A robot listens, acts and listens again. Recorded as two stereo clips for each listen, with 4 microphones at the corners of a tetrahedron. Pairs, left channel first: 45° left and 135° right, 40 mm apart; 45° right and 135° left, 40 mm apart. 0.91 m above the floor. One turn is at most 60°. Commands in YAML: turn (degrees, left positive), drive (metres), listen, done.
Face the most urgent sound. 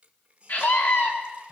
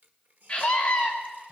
turn: 20
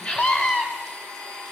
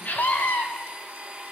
turn: -10
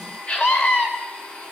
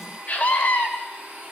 done: "Found it: a scream, straight ahead, over 4 m away."